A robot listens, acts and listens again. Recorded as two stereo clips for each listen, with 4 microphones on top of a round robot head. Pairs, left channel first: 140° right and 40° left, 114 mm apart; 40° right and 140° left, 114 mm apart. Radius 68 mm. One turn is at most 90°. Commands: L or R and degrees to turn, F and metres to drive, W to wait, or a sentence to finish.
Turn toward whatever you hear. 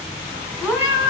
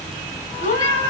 R40
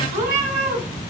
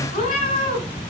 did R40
L15
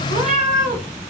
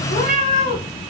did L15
L10
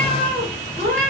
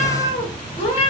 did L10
L10
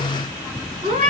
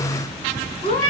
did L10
Facing the cat meowing, 2 to 4 m away.